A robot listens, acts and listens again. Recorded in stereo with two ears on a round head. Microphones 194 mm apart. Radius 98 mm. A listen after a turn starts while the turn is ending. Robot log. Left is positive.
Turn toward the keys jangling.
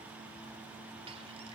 cmd idle
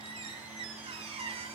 cmd idle
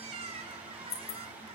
note: The keys jangling: about 45° left or 135° left.
cmd yaw +45
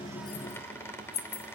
note: So it is at 105° left.
cmd yaw +105
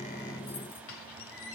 cmd idle
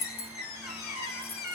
note: The keys jangling is now 25° left.
cmd yaw +25
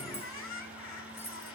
note: The keys jangling is now 10° left.
cmd yaw +10
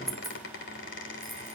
cmd idle
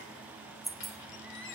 end: Found it: keys jangling, straight ahead, 2 to 4 m away.